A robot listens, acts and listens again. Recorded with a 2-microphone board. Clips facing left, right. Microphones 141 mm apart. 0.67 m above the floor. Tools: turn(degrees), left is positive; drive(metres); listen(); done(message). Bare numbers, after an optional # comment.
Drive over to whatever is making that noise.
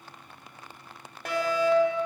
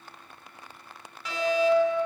# The fire alarm: about 60° left or 120° left.
turn(60)
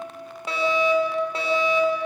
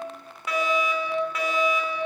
# So it is at 35° left.
turn(35)
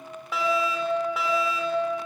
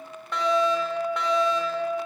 drive(1.0)
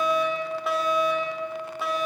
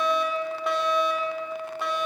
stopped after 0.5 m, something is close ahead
done("Blocked. The fire alarm is further on, straight ahead.")